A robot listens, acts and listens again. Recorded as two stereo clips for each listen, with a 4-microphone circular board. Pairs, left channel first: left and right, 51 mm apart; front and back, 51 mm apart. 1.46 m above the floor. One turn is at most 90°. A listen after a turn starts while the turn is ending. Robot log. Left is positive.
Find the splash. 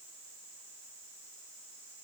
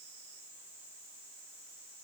cmd idle
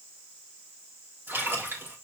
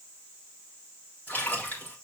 note: The splash: 50° right.
cmd yaw -50
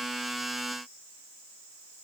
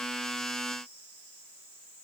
end: Facing where the splash came from. I can't hear it now.